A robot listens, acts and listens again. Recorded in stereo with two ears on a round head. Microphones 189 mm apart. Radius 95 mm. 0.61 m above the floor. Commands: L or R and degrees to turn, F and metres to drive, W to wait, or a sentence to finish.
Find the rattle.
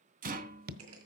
R40
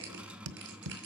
Facing the rattle.